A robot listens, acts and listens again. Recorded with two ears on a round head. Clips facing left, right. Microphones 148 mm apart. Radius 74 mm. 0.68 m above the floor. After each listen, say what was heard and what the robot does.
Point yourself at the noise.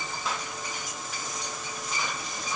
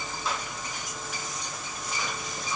Keep listening.
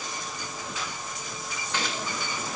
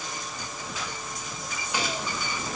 Turn 30° right.
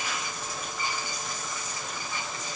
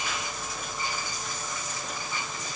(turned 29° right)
Keep listening.
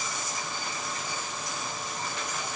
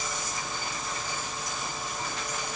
I heard a gunshot, but can't make it out now. It was about 20° left or 140° right.